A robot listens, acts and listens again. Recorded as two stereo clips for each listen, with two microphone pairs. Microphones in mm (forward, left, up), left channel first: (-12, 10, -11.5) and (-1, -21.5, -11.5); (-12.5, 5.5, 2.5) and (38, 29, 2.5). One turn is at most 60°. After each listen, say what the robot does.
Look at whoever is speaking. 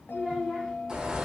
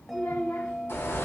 Turn 60° right.
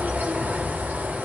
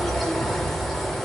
Turn 60° right.
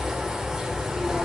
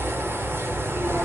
Turn 55° right.
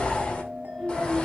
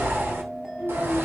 Turn 10° left.
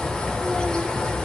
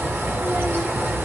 Keep listening.
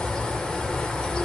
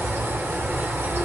Keep listening.
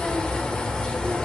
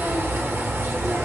Facing where the child speaking came from. I can't hear it now.